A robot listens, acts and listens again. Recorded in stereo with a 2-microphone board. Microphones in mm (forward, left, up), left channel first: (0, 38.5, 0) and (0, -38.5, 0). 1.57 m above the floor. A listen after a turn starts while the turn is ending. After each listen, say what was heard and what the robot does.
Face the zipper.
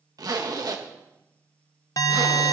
The zipper: about 55° right or 125° right. Turn 55° right.
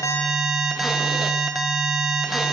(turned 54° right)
Keep listening.
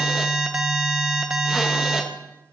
Keep listening.
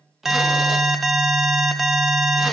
I heard a zipper, but can't make it out now. It was about straight ahead or 70° right.